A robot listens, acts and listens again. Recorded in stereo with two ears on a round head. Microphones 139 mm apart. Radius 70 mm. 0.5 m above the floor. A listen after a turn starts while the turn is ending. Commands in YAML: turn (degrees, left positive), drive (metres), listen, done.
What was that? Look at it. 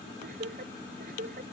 turn: -60
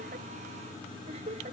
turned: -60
turn: -45
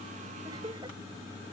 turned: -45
turn: -30
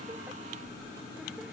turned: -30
listen: true
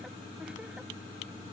listen: true
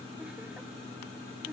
done: "I heard laughter from this way, but can't make it out now."